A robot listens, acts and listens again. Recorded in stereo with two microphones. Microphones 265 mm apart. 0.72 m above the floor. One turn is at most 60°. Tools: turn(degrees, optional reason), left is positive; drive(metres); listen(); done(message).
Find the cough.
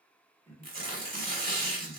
turn(degrees=30)
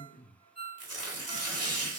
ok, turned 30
turn(degrees=60, reason="So it is at 140° left.")
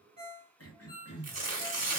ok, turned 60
turn(degrees=60, reason="The cough is now 90° left.")
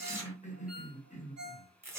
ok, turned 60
turn(degrees=30, reason="The cough is now 30° left.")
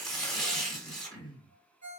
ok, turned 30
turn(degrees=20, reason="The cough is now 20° left.")
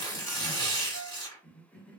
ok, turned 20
done("Found it: a cough, straight ahead, under 1 m away.")